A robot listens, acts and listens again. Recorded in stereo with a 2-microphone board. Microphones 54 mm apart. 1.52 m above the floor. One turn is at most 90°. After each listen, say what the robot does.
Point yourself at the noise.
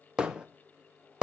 Turn 15° right.
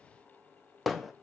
Found it: hammering, straight ahead, under 1 m away.